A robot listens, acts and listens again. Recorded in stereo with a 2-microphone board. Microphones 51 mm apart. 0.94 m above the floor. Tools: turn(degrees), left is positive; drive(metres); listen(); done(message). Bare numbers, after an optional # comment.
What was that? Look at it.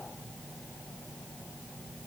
listen()
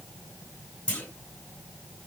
# The clunk: about 25° left or 155° left.
turn(25)
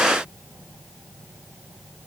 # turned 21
listen()
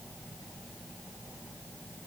done("I heard a clunk, but can't make it out now. It was about 5° left or 135° left.")